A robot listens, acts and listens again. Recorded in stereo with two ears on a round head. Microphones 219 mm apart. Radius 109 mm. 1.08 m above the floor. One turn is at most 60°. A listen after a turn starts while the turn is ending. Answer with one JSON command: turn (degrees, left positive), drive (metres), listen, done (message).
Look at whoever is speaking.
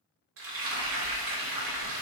{"listen": true}
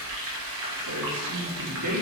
{"turn": -60}
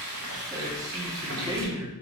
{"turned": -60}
{"turn": -15}
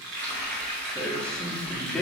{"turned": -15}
{"done": "Found it: a man speaking, straight ahead."}